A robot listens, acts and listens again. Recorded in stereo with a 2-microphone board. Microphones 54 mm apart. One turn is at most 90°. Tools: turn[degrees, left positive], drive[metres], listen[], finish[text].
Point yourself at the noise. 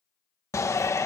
Thought: The shout: about 65° left or 115° left.
Action: turn[65]
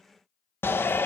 Thought: So it is at 45° left.
Action: turn[45]
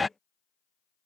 Action: finish[Found it: a shout, straight ahead.]